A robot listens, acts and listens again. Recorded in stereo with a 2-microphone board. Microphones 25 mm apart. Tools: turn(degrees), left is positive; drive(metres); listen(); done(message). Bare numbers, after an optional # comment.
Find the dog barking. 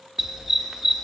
turn(-30)
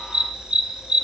# So it is at 135° right.
turn(-135)
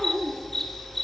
done("Found it: a dog barking, straight ahead, under 1 m away.")